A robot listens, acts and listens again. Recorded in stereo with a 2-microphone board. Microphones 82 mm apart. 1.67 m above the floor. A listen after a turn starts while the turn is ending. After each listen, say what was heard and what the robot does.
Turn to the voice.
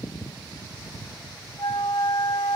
Keep listening.
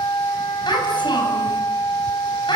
The child speaking: about 70° left or 110° left. Turn 70° left.
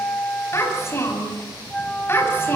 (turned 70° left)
So it is at 30° left. Turn 30° left.
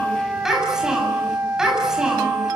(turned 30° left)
Found it: a child speaking, straight ahead, over 4 m away.